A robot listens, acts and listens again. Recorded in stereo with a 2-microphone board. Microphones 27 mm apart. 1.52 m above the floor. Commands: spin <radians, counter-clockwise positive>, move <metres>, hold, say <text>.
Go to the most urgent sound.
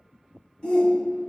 spin 0.79
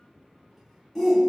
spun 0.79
move 1.0
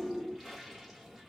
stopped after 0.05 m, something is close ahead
say Blocked. The shout is further on, straight ahead.